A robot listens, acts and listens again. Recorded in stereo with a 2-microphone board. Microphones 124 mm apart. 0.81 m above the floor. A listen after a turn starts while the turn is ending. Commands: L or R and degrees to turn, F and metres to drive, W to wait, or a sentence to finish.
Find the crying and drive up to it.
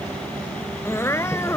L20
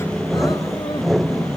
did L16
W
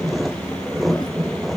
W
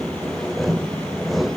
I heard crying, but can't make it out now. It was about 5° left or 140° left. I did not reach it.